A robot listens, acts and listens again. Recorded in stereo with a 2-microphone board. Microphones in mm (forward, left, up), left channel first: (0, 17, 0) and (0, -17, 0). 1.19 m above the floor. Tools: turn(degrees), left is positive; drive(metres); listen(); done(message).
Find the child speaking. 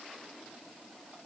listen()
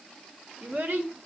turn(degrees=-65)
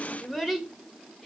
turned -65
turn(degrees=-10)
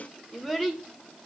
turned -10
done("Found it: a child speaking, straight ahead.")